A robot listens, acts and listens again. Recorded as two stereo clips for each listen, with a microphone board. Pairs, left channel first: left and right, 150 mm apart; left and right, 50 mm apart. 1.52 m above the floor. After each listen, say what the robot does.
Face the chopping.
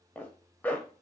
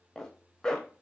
Keep listening.
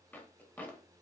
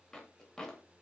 Keep listening.
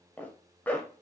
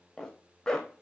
I can't make out chopping to turn to.